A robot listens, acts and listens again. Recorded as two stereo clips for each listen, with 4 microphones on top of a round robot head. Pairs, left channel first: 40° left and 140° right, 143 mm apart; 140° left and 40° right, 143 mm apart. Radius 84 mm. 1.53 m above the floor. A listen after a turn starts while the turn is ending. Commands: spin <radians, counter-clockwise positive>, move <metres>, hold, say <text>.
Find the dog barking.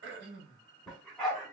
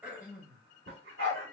spin -0.79
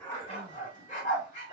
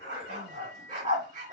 say Found it: a dog barking, straight ahead, 2 to 4 m away.